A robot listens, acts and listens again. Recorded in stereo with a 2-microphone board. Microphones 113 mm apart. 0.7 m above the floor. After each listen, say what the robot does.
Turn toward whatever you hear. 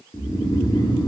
Turn 35° left.
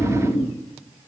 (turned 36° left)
Turn 105° left.
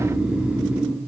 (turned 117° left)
Turn 10° right.
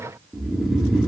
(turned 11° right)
Found it: snoring, straight ahead.